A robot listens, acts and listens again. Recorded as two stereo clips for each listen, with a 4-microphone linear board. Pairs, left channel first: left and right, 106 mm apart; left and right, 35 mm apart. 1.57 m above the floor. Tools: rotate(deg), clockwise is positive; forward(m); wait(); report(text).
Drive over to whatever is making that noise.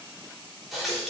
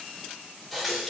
rotate(-30)
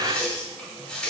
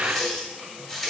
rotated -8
rotate(-30)
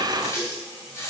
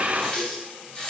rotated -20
rotate(-150)
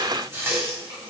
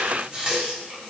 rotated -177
rotate(25)
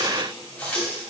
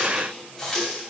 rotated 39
rotate(-15)
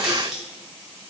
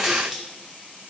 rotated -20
forward(1.0)
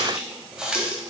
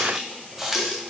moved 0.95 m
rotate(10)
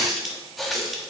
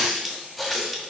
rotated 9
forward(1.0)
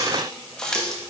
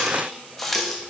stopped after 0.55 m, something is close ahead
rotate(-10)
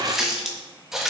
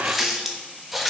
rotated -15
report("Arrived at the running tap, straight ahead.")